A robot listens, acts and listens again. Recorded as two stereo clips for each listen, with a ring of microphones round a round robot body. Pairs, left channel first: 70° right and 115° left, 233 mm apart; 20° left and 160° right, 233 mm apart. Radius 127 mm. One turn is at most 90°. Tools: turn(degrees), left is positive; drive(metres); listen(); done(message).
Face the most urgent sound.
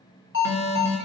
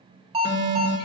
turn(degrees=-90)
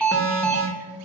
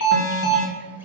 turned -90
turn(degrees=15)
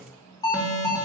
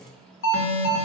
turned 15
done("Found it: an alarm, straight ahead, 2 to 4 m away.")